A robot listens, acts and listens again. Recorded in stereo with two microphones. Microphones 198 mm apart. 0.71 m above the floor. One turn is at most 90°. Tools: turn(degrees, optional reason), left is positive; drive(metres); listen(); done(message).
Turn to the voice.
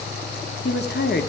turn(degrees=55, reason="The woman speaking: about 55° left or 125° left.")
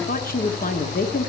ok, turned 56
turn(degrees=55, reason="So it is at 55° left.")
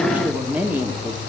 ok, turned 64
turn(degrees=-10, reason="The woman speaking is now 10° right.")
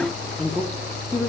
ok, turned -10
done("Found it: a woman speaking, straight ahead, 1 to 2 m away.")